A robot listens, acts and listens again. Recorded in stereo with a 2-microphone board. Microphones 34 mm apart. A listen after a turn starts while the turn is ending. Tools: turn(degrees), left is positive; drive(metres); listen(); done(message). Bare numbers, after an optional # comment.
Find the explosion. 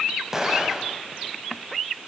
turn(-30)
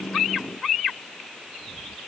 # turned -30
listen()
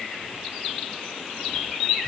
done("I heard an explosion, but can't make it out now. It was about 20° left or 140° right.")